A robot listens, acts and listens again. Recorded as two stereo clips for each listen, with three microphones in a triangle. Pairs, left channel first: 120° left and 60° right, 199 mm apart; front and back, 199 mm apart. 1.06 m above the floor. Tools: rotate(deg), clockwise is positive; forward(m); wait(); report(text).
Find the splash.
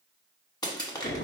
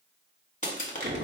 wait()
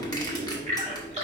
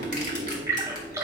rotate(105)
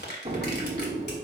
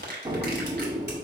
report("Facing where the splash came from. I can't hear it now.")